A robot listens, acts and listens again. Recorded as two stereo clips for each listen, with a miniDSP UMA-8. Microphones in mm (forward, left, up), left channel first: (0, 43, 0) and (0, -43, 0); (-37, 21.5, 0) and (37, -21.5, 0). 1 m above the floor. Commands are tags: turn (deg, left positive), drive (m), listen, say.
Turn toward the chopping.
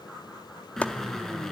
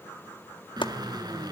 <turn deg="165"/>
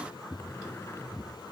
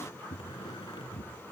<listen/>
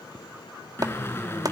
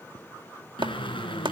<turn deg="-50"/>
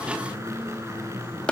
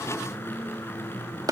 <turn deg="15"/>
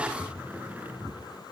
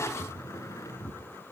<listen/>
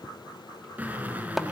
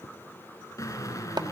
<say>Facing the chopping, 1 to 2 m away.</say>